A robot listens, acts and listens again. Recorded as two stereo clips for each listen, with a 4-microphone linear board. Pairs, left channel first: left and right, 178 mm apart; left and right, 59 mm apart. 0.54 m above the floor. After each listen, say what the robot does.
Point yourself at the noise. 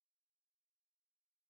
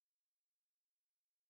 Keep listening.
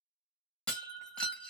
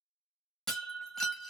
Turn 30° left.
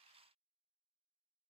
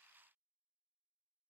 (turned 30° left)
Keep listening.
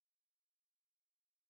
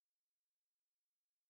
I heard breaking glass, but can't make it out now. It was about 25° right or 145° left.